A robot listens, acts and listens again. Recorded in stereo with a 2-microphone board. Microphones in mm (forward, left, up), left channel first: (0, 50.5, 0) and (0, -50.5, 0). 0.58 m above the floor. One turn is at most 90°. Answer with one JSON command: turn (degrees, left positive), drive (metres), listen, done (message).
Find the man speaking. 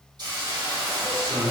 {"turn": -45}
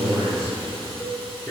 {"turn": 20}
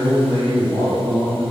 {"turn": 30}
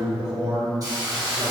{"turn": 20}
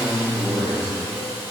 {"turn": 15}
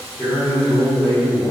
{"turn": 10}
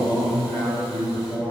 {"done": "Facing the man speaking, 1 to 2 m away."}